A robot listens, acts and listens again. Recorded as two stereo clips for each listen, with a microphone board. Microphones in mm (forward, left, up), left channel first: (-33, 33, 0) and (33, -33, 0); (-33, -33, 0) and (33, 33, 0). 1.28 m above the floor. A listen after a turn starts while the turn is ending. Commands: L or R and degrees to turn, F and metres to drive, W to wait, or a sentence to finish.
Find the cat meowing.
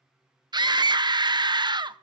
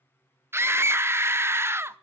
W
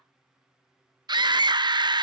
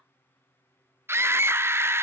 W
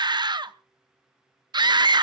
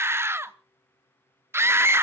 I can't make out a cat meowing to turn to.